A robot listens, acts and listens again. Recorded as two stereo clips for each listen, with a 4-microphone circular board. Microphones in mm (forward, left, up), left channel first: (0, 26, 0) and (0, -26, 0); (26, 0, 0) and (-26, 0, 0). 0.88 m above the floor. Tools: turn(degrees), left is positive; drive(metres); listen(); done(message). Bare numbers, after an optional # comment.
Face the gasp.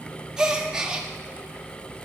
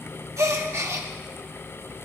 # The gasp: 165° right.
turn(-165)
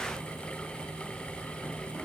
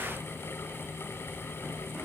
done("I heard a gasp from this way, but can't make it out now.")